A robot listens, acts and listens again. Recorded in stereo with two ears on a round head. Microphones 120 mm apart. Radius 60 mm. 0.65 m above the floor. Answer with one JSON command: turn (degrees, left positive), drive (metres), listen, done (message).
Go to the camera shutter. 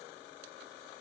{"listen": true}
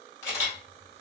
{"turn": 25}
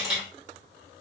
{"drive": 1.0}
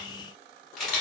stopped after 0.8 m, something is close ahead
{"done": "I am next to the camera shutter."}